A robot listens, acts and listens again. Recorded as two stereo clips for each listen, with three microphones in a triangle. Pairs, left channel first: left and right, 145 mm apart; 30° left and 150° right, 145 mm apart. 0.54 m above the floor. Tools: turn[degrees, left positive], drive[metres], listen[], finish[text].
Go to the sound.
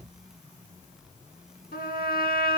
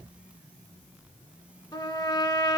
Thought: The trumpet: 95° left.
Action: turn[95]
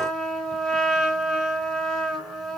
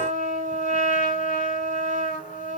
Action: drive[1.0]
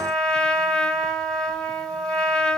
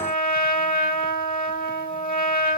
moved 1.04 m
Action: drive[1.0]
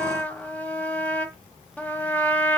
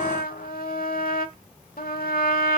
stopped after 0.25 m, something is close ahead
Thought: The trumpet is now 10° left.
Action: turn[10]
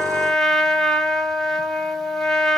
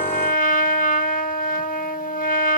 Action: finish[Arrived at the trumpet, straight ahead.]